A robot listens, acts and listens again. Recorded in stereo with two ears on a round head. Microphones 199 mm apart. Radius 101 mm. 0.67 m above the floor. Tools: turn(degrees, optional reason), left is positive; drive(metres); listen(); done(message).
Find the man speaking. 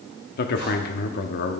turn(degrees=45, reason="The man speaking: about 45° left or 135° left.")
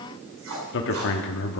turn(degrees=75, reason="So it is at 75° left.")
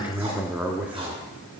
turn(degrees=-10, reason="The man speaking is now 10° right.")
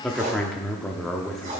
done("Found it: a man speaking, straight ahead.")